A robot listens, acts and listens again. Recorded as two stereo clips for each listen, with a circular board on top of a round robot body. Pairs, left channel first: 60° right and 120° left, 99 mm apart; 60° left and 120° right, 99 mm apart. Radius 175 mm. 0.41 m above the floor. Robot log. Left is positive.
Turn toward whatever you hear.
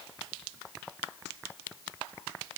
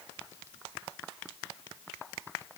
cmd idle
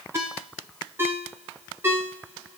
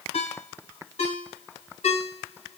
note: The ringtone: 50° left.
cmd yaw +50
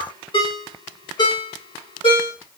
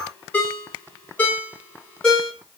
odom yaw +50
note: The ringtone is now 15° right.
cmd yaw -15
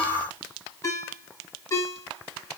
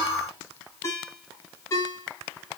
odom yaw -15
end: Found it: a ringtone, straight ahead.